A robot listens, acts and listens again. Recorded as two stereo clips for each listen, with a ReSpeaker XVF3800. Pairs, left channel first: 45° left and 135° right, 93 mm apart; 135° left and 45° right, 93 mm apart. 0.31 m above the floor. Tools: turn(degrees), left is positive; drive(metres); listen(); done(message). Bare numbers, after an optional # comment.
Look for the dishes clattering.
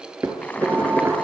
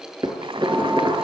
# The dishes clattering: 80° right.
turn(-80)
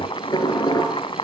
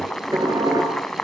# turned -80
done("Found it: dishes clattering, straight ahead, 2 to 4 m away.")